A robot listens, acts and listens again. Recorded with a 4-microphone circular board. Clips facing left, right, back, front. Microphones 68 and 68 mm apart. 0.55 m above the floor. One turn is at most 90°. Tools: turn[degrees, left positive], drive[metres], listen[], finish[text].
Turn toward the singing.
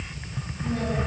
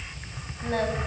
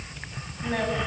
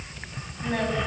Thought: The singing: 95° right.
Action: turn[-90]
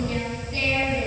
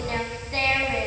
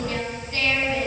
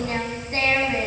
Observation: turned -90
Thought: The singing is now 60° right.
Action: turn[-60]
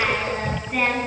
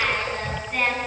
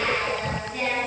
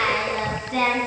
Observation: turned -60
Action: finish[Found it: singing, straight ahead.]